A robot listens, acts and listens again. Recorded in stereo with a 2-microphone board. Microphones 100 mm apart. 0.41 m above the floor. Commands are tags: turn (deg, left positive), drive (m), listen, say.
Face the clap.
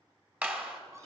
<turn deg="-30"/>
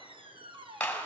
<turn deg="15"/>
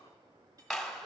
<say>Facing the clap, 1 to 2 m away.</say>